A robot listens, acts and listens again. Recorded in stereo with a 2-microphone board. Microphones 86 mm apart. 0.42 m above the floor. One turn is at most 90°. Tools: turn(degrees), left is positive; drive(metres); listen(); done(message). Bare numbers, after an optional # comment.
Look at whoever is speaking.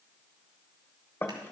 listen()
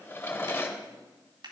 listen()
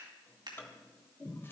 done("I can't make out anyone speaking, only a drawer and scissors.")